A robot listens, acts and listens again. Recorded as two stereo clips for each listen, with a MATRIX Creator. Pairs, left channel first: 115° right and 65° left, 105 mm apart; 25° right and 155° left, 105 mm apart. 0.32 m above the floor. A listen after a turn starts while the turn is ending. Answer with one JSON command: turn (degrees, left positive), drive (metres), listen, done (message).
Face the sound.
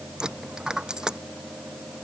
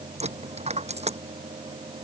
{"turn": 150}
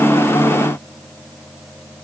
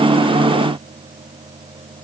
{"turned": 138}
{"turn": 10}
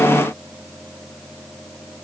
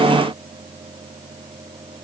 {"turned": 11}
{"done": "I heard a dropped coin from this way, but can't make it out now."}